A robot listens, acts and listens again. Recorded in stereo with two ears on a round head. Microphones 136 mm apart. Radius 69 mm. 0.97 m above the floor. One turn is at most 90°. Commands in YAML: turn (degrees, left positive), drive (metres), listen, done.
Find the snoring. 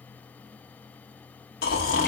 turn: 70
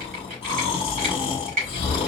turn: 35
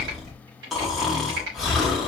done: "Found it: snoring, straight ahead, 1 to 2 m away."